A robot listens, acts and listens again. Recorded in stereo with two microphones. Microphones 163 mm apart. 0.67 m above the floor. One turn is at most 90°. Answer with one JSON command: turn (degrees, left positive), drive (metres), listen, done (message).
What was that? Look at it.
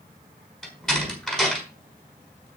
{"turn": 30}
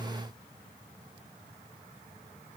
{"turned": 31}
{"listen": true}
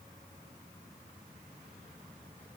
{"done": "I heard a door slam, but can't make it out now. It was about 30° right or 145° left."}